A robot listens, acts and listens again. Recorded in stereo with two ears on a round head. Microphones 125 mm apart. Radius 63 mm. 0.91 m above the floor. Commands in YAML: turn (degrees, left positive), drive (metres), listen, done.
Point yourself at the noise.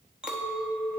turn: -30
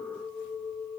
turn: 25
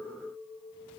turn: -15
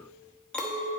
done: "Facing the clink, under 1 m away."